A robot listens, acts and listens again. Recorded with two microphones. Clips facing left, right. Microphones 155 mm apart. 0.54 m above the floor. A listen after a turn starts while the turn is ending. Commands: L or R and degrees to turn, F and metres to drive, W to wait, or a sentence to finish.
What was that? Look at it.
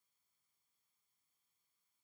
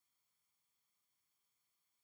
W
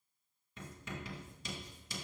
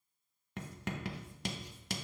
R90
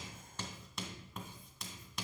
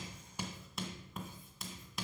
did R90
Found it: writing, straight ahead, 1 to 2 m away.